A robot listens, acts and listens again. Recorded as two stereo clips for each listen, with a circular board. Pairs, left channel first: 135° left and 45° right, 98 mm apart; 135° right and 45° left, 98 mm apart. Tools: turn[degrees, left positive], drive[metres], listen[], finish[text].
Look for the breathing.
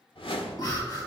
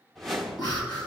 Thought: The breathing: straight behind.
Action: turn[180]
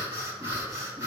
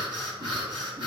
Thought: The breathing is now 10° left.
Action: turn[10]
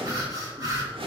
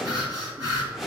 Action: finish[Found it: breathing, straight ahead.]